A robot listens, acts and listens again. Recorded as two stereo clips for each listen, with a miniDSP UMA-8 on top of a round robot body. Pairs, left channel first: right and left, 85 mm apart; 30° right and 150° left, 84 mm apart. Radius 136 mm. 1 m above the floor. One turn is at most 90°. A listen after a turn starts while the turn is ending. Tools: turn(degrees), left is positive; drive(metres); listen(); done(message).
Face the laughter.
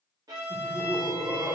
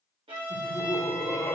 turn(degrees=25)
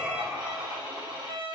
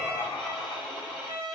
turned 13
turn(degrees=10)
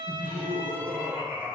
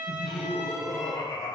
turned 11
turn(degrees=-10)
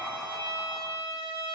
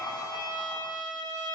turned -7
done("Found it: laughter, straight ahead.")